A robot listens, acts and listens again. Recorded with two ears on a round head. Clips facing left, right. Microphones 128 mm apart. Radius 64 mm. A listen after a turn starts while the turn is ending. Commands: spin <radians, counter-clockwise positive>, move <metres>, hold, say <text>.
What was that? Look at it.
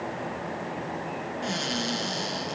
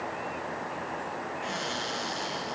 spin 0.79
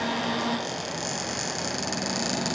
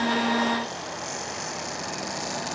spin 1.57
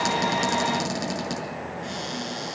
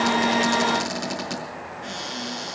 spin 0.26
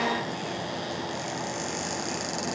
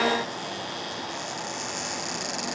say Facing the cupboard door, over 4 m away.